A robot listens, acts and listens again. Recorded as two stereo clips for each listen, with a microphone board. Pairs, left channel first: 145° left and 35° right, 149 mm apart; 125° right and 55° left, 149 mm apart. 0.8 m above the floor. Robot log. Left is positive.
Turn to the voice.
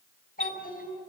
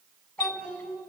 note: The child speaking: 155° left.
cmd yaw +155
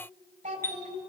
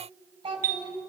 end: Facing the child speaking, 2 to 4 m away.